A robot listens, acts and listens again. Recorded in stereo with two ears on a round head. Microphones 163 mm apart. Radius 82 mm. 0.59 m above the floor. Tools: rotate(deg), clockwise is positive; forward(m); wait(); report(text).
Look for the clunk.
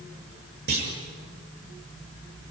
rotate(60)
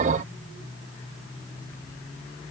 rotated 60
wait()
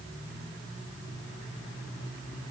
report("I heard a clunk, but can't make it out now. It was about straight ahead or 60° right.")